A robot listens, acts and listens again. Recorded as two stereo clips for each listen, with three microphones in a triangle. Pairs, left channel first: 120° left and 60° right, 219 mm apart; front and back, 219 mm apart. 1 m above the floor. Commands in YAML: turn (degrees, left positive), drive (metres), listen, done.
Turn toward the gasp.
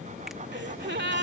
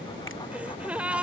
turn: -95
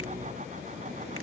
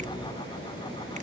done: "I heard a gasp from this way, but can't make it out now."